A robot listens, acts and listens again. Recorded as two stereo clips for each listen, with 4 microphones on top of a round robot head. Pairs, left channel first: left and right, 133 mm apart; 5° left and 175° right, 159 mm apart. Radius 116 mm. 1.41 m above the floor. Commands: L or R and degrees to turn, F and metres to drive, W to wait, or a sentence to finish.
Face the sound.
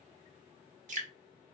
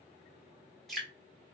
R85
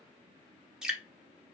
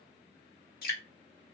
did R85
Found it: dripping, straight ahead.